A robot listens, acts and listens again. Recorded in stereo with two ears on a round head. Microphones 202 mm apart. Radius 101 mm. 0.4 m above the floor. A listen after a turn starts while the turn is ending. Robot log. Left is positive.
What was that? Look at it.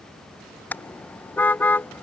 cmd yaw +30
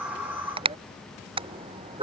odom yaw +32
note: So it is at 25° right.
cmd yaw -25
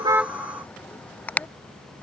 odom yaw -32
end: Found it: a car horn, straight ahead.